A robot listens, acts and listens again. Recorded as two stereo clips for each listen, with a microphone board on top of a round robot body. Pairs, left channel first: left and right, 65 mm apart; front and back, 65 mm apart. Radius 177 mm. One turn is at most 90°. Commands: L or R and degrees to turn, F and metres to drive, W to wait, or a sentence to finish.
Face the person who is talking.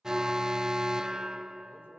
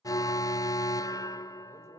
L90
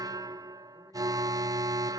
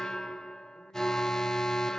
L50
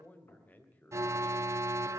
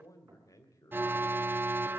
L25
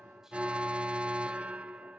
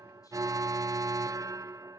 W
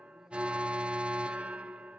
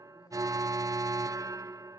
W
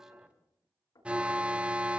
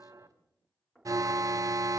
Facing where the man speaking came from. I can't hear it now.